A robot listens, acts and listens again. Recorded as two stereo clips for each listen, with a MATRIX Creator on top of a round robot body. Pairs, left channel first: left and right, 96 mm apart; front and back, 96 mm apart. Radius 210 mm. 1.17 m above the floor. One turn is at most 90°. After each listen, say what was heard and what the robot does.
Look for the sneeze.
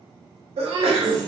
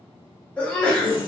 The sneeze: 75° right. Turn 75° right.
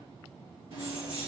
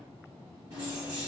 I heard a sneeze from this way, but can't make it out now.